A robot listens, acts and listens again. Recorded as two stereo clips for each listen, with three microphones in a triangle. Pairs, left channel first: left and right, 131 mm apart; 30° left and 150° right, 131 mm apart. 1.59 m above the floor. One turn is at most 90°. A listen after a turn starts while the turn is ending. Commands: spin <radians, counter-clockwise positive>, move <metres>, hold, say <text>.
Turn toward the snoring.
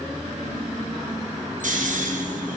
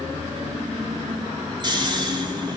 spin -1.57
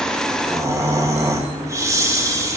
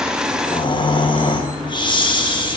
spin -0.44
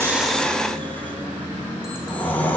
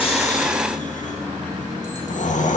spin 0.26
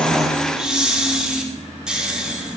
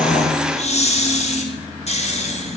say Facing the snoring, 1 to 2 m away.